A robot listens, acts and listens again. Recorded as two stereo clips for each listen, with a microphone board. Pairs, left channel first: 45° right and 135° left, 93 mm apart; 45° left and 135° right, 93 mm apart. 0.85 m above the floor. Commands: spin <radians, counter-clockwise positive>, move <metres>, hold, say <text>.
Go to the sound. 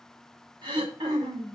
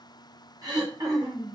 spin 3.05
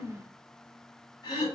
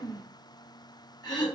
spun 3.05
move 1.0
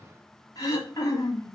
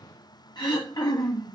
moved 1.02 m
move 1.0
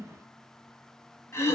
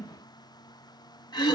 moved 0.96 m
spin 0.17
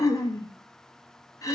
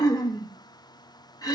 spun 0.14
move 1.0
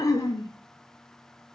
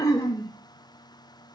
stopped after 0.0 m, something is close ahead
say Arrived at the throat clearing, straight ahead.